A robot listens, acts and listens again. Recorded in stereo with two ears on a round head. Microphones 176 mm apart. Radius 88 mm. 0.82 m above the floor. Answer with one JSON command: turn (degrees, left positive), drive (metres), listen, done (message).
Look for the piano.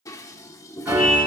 {"turn": -30}
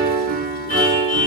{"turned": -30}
{"turn": -135}
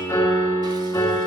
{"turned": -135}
{"turn": 15}
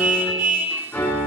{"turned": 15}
{"done": "Facing the piano, over 4 m away."}